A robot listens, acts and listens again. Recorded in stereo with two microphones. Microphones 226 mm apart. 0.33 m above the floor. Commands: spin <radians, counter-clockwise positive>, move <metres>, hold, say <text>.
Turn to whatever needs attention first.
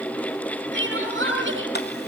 spin -0.96
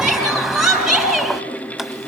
say Facing the crying, over 4 m away.